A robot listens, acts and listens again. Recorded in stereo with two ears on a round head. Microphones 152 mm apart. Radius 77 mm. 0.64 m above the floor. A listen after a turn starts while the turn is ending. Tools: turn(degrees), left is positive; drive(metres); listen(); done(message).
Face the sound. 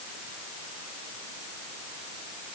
listen()
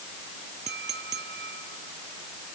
turn(degrees=-70)
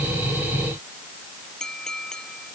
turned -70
done("Facing the clink.")